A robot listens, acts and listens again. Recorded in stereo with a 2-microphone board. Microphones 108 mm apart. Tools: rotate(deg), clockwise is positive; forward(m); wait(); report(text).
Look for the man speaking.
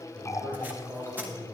rotate(20)
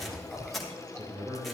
rotate(25)
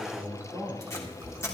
rotate(145)
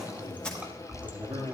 rotate(30)
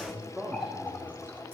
report("Facing the man speaking.")